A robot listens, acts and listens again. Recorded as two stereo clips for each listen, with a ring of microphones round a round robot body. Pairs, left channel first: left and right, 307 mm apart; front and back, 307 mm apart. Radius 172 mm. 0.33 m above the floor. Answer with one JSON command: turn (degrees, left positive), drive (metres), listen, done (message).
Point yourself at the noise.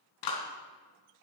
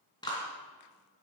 {"turn": 75}
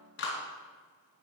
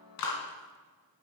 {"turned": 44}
{"turn": 35}
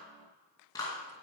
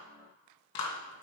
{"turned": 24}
{"turn": 10}
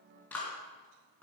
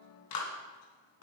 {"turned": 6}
{"done": "Found it: a clap, straight ahead."}